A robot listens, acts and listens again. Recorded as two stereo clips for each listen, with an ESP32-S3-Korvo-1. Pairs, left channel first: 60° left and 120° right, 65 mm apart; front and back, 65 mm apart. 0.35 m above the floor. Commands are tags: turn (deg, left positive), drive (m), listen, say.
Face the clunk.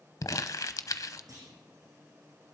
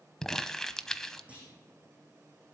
<turn deg="-110"/>
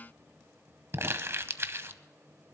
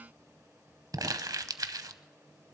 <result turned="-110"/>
<say>I heard a clunk from this way, but can't make it out now.</say>